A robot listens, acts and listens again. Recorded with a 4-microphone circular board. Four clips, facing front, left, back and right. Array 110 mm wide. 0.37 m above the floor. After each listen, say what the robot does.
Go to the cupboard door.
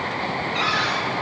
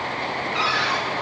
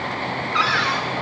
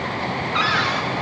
Turn 155° right.
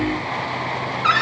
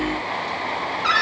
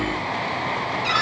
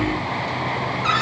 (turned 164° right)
Turn 10° left.
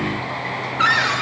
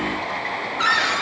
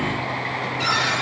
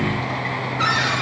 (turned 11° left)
Drive 1.0 m forward.
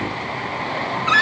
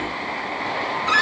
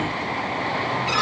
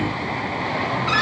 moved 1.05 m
Drive 1.0 m forward.
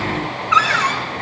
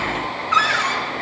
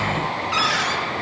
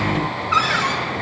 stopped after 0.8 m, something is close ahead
I am next to the cupboard door.